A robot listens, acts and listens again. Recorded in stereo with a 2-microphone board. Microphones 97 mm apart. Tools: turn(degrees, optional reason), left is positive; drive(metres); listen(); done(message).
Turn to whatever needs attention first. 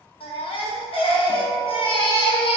turn(degrees=65, reason="The baby crying: about 65° left or 115° left.")
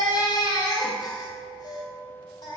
turn(degrees=45, reason="So it is at 45° left.")
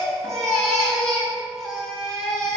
done("Found it: a baby crying, straight ahead, 1 to 2 m away.")